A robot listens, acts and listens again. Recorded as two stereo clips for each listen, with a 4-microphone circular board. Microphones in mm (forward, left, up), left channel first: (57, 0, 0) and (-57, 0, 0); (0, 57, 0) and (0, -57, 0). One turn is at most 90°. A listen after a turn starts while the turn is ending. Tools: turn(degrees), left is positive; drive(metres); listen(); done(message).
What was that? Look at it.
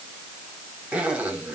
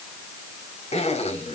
turn(degrees=90)
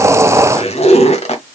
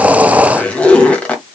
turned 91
turn(degrees=10)
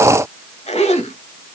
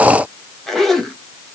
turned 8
done("Facing the zipper.")